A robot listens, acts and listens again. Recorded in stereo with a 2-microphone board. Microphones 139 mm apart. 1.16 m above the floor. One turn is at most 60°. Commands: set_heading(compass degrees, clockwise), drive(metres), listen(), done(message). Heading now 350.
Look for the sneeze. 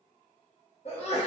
set_heading(305)
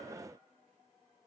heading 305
listen()
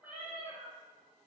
done("I heard a sneeze, but can't make it out now. It was about straight ahead or 90° left.")